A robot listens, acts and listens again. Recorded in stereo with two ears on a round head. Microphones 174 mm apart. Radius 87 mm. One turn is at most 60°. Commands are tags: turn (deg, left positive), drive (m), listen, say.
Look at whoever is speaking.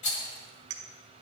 <listen/>
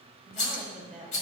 <turn deg="-30"/>
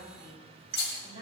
<turn deg="-60"/>
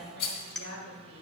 <turn deg="-60"/>
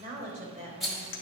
<turn deg="-40"/>
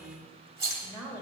<say>Facing the woman speaking.</say>